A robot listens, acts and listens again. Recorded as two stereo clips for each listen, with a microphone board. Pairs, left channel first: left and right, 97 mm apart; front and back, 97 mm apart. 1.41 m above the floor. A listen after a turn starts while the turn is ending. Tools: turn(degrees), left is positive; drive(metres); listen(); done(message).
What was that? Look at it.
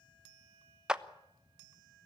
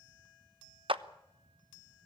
turn(degrees=-170)
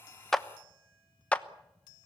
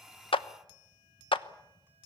turn(degrees=15)
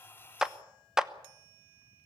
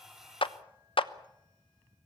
done("Facing the clap, under 1 m away.")